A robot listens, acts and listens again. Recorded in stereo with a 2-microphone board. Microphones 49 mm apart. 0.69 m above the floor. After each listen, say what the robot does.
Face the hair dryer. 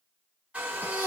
Turn 25° right.
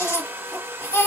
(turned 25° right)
Turn 130° right.
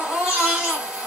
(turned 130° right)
Keep listening.
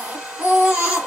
Turn 15° right.
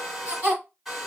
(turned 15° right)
Found it: a hair dryer, straight ahead.